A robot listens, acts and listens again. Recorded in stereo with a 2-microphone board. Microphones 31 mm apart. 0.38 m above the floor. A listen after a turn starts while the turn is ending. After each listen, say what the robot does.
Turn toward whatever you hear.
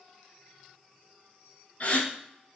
Turn 50° left.
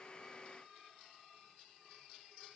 Keep listening.
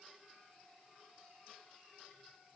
I heard a gasp, but can't make it out now. It was about straight ahead or 80° left.